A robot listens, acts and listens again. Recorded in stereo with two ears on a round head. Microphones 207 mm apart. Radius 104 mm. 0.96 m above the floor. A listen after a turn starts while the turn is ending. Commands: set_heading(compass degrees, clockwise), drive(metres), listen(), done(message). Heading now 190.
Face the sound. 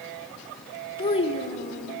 set_heading(155)
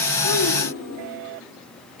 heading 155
set_heading(60)
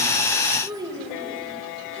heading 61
set_heading(81)
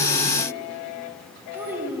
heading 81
set_heading(91)
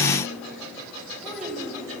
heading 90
done("Facing the child speaking.")